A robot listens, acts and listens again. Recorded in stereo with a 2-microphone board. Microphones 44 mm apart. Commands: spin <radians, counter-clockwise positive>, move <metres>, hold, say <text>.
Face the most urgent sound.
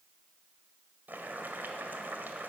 hold
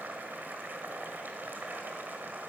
hold
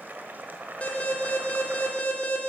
spin 0.61
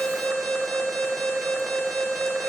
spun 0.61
say Facing the alarm.